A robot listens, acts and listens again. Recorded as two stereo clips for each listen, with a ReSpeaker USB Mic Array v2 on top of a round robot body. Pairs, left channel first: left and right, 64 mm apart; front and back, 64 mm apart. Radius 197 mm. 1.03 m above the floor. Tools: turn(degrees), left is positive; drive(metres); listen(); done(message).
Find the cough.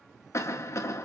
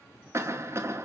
turn(degrees=135)
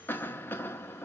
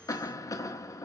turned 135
turn(degrees=30)
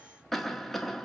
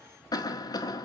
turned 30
done("Facing the cough.")